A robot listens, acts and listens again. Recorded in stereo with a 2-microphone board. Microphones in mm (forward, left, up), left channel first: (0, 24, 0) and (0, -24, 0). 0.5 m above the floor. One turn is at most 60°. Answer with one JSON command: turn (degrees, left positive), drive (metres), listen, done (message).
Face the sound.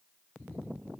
{"listen": true}
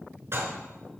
{"turn": -60}
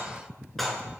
{"done": "Found it: dishes clattering, straight ahead."}